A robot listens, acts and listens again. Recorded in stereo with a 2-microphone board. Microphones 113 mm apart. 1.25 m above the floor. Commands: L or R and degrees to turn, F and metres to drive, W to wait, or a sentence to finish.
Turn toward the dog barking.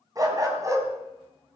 R30
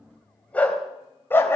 L20
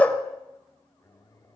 L15
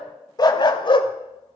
L45
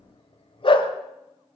L50
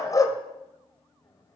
L30
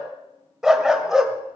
Facing the dog barking.